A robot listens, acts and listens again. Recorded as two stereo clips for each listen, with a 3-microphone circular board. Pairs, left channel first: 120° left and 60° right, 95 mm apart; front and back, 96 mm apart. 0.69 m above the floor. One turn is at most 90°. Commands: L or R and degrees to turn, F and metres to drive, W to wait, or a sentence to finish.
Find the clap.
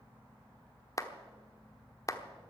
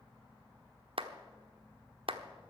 L90
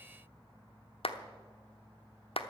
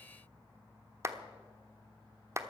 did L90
L90
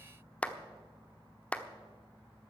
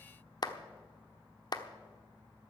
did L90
L40
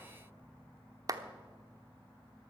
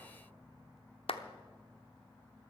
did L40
R10
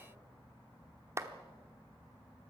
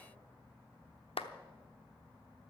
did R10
Facing the clap, 1 to 2 m away.